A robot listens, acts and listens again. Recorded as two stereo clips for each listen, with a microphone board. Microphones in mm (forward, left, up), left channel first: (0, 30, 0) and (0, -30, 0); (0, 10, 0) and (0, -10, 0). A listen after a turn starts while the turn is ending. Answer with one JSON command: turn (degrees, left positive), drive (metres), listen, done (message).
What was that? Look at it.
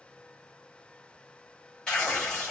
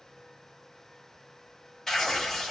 {"turn": 30}
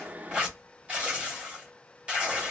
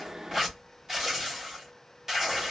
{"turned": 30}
{"turn": -15}
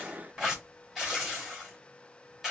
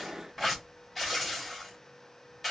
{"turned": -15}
{"done": "Found it: tearing paper, straight ahead."}